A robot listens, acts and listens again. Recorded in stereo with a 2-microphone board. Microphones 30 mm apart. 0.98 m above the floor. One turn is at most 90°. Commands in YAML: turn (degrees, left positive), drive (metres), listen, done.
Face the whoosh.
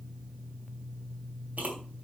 turn: -55
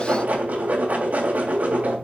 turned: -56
turn: -70
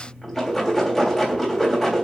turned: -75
done: "Found it: a whoosh, straight ahead, 2 to 4 m away."